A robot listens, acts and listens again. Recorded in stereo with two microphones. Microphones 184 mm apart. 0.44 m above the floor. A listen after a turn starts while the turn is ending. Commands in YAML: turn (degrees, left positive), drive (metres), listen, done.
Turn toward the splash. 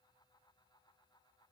listen: true
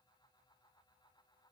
listen: true
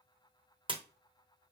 turn: -25
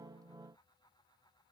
listen: true
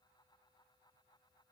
done: "I heard a splash, but can't make it out now. It was about straight ahead or 130° right."